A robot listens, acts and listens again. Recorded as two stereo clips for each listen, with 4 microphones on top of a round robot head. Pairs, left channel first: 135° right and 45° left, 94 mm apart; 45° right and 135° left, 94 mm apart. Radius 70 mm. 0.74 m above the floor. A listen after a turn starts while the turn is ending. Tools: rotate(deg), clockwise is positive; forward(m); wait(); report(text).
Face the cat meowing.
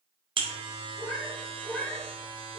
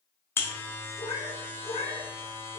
rotate(60)
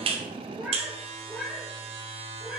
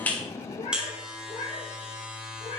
rotate(40)
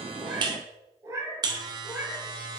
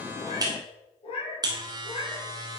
rotate(20)
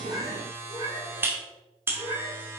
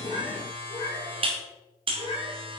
report("Found it: a cat meowing, straight ahead.")